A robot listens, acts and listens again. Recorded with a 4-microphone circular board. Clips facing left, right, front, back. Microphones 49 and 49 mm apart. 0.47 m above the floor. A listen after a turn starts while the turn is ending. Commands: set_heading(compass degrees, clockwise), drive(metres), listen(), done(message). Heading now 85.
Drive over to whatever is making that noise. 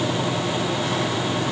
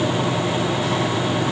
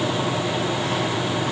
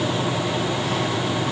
listen()
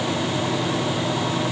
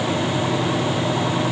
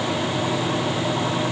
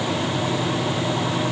listen()
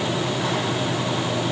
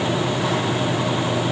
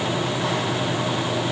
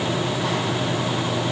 done("I can't make out anything.")